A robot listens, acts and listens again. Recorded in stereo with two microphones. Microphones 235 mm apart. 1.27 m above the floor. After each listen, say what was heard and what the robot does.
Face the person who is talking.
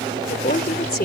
The woman speaking: about 40° left or 140° left. Turn 40° left.
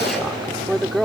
Found it: a woman speaking, straight ahead.